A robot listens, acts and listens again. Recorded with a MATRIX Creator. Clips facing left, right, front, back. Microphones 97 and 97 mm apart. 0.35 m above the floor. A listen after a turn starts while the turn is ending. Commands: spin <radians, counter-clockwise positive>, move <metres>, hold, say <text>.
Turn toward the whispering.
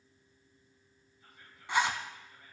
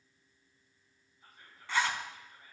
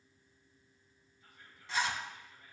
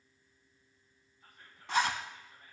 spin -2.53
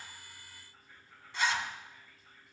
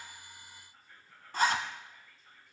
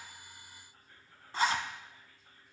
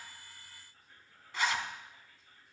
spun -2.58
say Found it: whispering, straight ahead, 2 to 4 m away.